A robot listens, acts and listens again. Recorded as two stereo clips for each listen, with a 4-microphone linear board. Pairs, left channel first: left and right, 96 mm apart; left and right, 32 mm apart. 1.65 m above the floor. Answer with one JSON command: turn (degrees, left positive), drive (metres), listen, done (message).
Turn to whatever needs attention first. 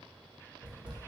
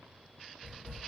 {"listen": true}
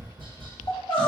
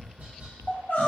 {"turn": 65}
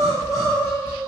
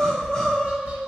{"turn": 40}
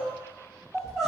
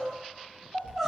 {"done": "Facing the crying."}